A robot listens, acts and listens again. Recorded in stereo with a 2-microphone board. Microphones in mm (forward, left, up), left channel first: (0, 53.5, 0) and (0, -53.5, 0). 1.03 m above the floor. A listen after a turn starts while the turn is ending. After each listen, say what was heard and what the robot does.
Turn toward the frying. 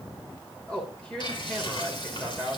The frying: about 50° left or 130° left. Turn 50° left.
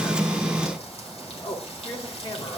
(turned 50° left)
So it is at 80° left. Turn 80° left.
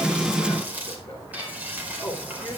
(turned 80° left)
The frying is now 15° right. Turn 15° right.
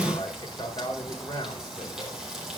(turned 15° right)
Found it: frying, straight ahead.